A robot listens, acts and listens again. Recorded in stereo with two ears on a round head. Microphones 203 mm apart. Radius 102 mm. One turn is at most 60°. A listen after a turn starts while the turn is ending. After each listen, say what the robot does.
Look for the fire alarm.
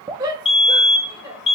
Turn 25° left.
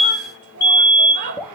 Turn 60° left.
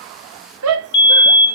Turn 60° left.
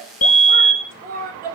Turn 30° left.
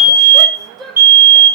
Turn 10° right.
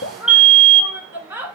Found it: a fire alarm, straight ahead.